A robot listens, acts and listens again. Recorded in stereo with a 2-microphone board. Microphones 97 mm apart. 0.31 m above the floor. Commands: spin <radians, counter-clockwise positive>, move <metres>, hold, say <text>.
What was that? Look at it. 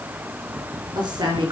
spin -0.79
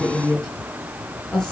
spin 0.17
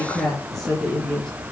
say Facing the woman speaking, over 4 m away.